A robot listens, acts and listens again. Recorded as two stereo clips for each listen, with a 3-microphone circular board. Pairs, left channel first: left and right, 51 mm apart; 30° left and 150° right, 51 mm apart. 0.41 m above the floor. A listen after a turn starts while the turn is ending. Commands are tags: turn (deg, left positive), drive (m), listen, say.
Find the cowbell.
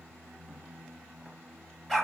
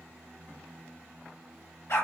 <listen/>
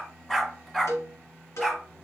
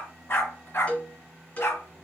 <turn deg="90"/>
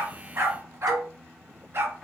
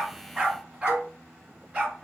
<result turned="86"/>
<listen/>
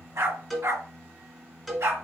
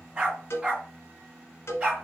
<say>Facing the cowbell.</say>